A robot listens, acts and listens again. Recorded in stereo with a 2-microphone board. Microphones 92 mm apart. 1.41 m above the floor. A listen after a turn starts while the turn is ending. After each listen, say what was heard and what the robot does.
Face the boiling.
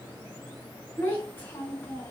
Keep listening.
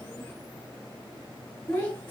Keep listening.
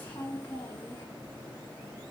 I can't make out boiling, only a child speaking.